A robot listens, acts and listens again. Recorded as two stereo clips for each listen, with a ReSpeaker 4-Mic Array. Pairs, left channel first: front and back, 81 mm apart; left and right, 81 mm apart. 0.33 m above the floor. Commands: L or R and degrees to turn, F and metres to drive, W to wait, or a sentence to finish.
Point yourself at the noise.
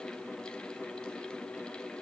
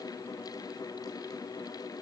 W
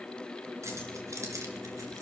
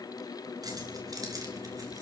R130
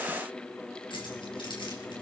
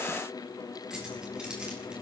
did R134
R10
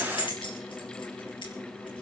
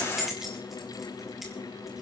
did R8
Found it: keys jangling, straight ahead, over 4 m away.